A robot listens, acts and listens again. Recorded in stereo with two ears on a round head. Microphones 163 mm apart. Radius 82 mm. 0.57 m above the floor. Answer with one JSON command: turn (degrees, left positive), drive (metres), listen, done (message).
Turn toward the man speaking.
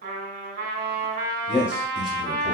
{"turn": -30}
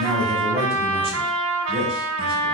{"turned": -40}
{"turn": -145}
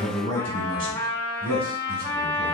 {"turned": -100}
{"turn": -50}
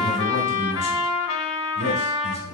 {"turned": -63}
{"turn": 15}
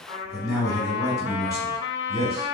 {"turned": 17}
{"done": "Facing the man speaking."}